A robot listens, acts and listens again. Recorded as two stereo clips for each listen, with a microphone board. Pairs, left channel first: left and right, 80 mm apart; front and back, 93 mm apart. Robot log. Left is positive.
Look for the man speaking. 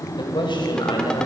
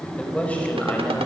note: The man speaking: 70° left.
cmd yaw +70
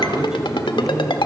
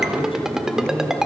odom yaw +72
note: The man speaking is now 10° right.
cmd yaw -10
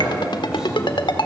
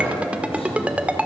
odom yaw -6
cmd idle
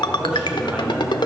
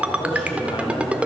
note: The man speaking is now 15° right.
cmd yaw -15
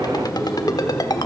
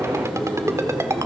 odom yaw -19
end: Facing the man speaking.